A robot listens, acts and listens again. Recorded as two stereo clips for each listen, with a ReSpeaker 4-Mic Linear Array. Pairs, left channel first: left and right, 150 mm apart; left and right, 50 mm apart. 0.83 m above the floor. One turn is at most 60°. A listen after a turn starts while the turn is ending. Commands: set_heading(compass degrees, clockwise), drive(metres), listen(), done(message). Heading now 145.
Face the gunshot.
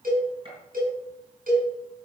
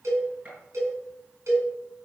set_heading(180)
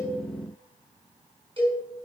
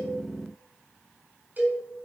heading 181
listen()
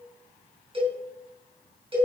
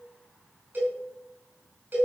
done("I heard a gunshot, but can't make it out now. It was about straight ahead or 110° right.")